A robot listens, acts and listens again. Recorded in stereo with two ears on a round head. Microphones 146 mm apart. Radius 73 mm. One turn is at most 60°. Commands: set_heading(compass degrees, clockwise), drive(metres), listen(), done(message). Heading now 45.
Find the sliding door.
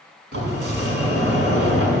set_heading(105)
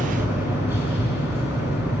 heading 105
set_heading(120)
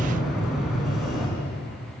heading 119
done("Facing the sliding door.")